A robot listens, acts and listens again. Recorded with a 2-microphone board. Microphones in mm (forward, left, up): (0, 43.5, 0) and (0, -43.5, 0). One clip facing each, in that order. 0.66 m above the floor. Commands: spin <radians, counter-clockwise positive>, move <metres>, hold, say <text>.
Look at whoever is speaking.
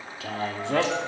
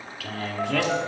spin 0.44
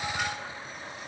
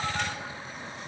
hold
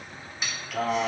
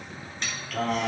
say Facing the man speaking, 1 to 2 m away.